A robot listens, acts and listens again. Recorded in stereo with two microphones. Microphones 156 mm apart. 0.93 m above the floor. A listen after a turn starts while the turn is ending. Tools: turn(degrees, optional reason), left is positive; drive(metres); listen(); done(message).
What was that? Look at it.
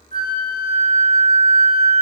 turn(degrees=-70, reason="The flute: about 70° right or 110° right.")
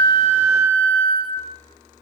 turn(degrees=-25, reason="So it is at 25° right.")
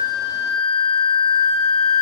turn(degrees=10, reason="The flute is now 10° left.")
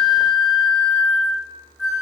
done("Facing the flute, 2 to 4 m away.")